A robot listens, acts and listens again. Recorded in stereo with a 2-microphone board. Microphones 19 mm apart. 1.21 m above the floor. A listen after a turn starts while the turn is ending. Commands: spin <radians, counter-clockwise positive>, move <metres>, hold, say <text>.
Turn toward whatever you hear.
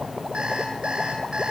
spin -1.31
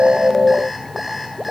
say Facing the alarm clock, over 4 m away.